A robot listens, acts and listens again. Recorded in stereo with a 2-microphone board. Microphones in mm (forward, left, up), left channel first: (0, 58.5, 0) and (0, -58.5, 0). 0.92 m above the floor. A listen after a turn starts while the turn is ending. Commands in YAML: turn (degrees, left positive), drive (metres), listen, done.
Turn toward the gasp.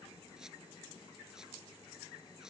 listen: true
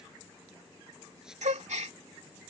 turn: -90
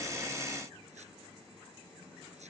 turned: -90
done: "Facing where the gasp came from. I can't hear it now."